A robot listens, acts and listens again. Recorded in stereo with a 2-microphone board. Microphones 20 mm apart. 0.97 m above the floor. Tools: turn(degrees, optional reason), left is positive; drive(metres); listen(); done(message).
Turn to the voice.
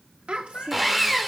turn(degrees=-65, reason="The child speaking: about 65° right or 115° right.")
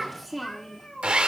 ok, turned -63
done("Facing the child speaking, 1 to 2 m away.")